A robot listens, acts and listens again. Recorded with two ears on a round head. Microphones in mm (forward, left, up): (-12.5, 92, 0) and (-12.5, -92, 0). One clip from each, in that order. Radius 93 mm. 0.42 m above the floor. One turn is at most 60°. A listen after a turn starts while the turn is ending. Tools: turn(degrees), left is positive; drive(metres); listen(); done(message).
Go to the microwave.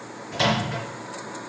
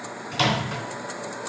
turn(degrees=-60)
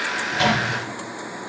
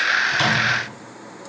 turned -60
listen()
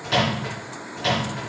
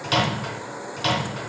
turn(degrees=-50)
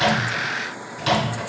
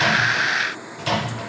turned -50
turn(degrees=15)
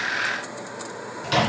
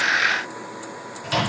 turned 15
drive(metres=1.0)
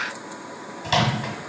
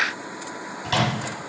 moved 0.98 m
turn(degrees=10)
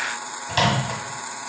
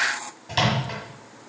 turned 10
drive(metres=1.0)
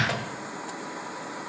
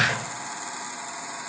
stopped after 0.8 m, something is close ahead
listen()
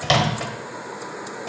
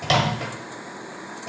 turn(degrees=10)
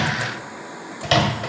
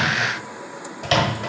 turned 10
done("I am next to the microwave.")